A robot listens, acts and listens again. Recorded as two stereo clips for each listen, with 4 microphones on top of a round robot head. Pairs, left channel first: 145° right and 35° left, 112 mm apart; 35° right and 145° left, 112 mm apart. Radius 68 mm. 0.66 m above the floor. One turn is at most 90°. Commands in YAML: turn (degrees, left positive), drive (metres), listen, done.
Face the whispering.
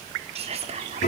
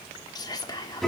turn: 15
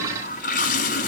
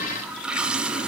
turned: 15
listen: true
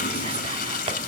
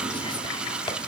listen: true
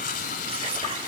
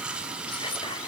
done: "Facing where the whispering came from. I can't hear it now."